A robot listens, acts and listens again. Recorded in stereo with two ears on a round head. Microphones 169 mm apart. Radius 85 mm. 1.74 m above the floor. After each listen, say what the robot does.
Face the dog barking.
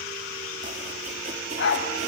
Turn 65° left.
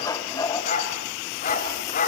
Turn 45° left.
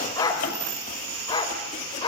Turn 25° left.
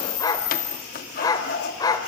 Turn 20° left.
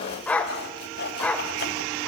Found it: a dog barking, straight ahead.